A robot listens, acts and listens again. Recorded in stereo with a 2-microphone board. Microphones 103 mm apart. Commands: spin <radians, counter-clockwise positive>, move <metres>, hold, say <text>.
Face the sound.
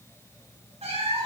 spin -1.57
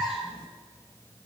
spin 0.17
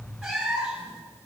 say Found it: a cat meowing, straight ahead, 2 to 4 m away.